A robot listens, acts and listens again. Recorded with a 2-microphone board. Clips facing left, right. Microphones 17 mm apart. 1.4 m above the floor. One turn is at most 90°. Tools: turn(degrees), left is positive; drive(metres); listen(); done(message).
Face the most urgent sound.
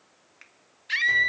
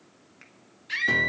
turn(degrees=15)
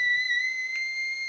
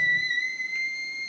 done("Facing the scream, 1 to 2 m away.")